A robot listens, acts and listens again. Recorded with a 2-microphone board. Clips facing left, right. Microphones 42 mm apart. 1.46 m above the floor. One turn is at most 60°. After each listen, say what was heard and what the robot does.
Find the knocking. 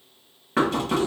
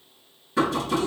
The knocking: about 55° left or 125° left. Turn 55° left.
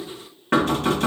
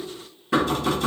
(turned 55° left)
So it is at 65° left. Turn 60° left.
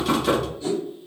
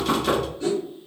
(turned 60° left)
Facing the knocking.